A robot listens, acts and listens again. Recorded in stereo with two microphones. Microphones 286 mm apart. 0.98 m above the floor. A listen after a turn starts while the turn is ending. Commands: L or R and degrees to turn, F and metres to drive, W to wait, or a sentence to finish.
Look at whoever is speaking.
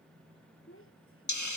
L45
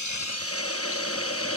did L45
W
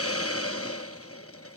W
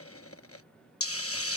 I heard a child speaking, but can't make it out now. It was about straight ahead or 90° left.